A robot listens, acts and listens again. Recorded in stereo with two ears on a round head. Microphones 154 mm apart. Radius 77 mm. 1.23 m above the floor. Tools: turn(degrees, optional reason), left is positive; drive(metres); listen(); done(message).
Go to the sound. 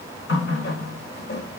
turn(degrees=65, reason="The running tap: about 65° left or 115° left.")
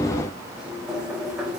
drive(metres=1.0)
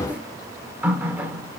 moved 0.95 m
turn(degrees=-10, reason="The running tap is now 10° right.")
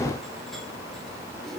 listen()
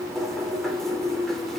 drive(metres=1.0)
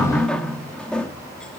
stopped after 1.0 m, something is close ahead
done("Arrived at the running tap, straight ahead.")